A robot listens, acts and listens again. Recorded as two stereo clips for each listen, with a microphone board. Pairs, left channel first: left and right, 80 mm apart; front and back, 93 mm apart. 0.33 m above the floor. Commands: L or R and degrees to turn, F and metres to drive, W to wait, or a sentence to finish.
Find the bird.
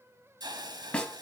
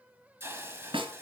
W
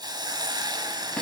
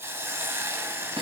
W
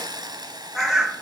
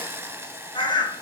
R10
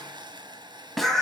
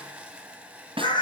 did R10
Facing the bird, 1 to 2 m away.